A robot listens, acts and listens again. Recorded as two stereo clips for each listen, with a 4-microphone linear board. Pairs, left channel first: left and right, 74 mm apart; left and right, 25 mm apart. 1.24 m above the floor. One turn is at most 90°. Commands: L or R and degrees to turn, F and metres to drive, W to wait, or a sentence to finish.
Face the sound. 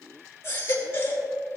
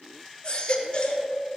L40
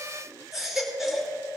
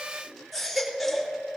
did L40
Facing the baby crying, 2 to 4 m away.